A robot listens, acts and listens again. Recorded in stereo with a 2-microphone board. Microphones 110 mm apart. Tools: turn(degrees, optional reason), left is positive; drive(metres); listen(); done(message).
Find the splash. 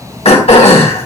listen()
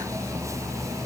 listen()
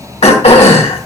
done("I can't make out a splash, only throat clearing.")